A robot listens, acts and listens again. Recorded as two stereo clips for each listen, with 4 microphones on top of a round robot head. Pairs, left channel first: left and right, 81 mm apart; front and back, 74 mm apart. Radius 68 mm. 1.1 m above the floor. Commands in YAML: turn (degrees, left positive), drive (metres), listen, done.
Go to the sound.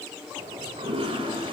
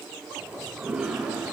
turn: -100
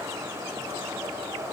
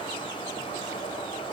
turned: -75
turn: -25
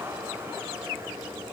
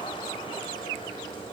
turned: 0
turn: -20
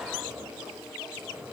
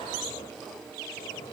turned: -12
turn: -10
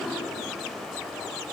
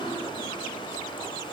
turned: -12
drive: 1.0
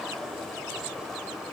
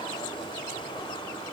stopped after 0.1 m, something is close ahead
done: "Blocked. The toilet flushing is further on, straight ahead."